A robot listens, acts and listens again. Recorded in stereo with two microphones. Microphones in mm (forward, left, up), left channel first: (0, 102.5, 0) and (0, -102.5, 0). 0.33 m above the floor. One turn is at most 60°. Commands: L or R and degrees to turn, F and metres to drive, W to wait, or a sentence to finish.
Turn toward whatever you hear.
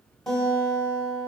L30
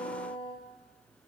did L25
L60
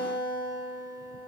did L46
L60
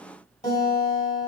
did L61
L40
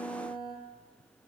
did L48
R10
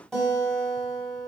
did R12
Facing the guitar.